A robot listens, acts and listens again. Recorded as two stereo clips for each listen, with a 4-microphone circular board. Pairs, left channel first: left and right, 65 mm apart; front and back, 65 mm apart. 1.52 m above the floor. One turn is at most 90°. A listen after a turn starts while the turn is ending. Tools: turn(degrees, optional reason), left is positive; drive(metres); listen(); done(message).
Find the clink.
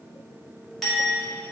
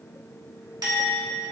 turn(degrees=90, reason="The clink: 175° left.")
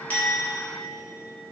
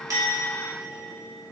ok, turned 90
turn(degrees=85, reason="Nothing new. It was at 85° left.")
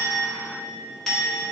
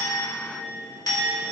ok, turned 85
done("Found it: a clink, straight ahead, 1 to 2 m away.")